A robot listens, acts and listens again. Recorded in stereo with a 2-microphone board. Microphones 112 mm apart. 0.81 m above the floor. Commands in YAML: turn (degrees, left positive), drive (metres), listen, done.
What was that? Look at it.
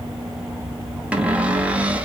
turn: -30
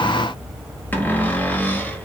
turn: 20
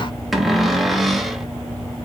done: "Facing the cupboard door, under 1 m away."